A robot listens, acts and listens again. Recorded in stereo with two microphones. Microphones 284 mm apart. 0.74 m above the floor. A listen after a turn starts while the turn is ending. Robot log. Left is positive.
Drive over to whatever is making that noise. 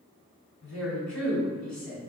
note: The woman speaking: about 65° left or 115° left.
cmd yaw +65
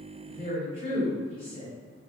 note: So it is at 35° left.
cmd yaw +35
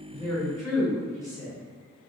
note: The woman speaking is now 10° left.
cmd yaw +10
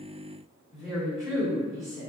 cmd fwd 1.0
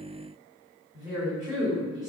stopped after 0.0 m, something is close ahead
end: Something is in my way. I am facing the woman speaking but have not reached it.